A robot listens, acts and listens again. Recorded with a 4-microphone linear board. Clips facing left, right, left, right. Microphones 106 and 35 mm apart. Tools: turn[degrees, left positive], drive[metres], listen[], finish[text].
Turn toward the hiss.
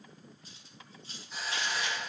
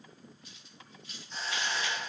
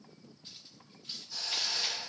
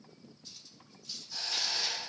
Action: turn[30]
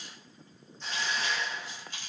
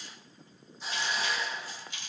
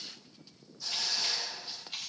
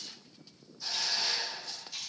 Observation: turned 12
Thought: So it is at 10° right.
Action: turn[-10]
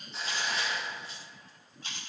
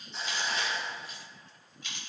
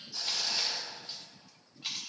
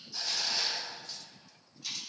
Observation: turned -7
Action: finish[Found it: a hiss, straight ahead.]